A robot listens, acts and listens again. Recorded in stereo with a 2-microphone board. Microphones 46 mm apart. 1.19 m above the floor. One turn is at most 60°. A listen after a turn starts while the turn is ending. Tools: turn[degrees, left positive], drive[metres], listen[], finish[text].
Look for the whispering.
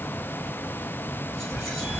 Action: turn[30]
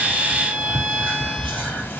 Thought: So it is at 150° left.
Action: turn[60]
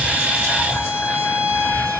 Thought: The whispering is now 95° left.
Action: turn[60]
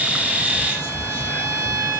Thought: The whispering is now 50° left.
Action: turn[50]
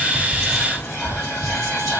Action: finish[Found it: whispering, straight ahead.]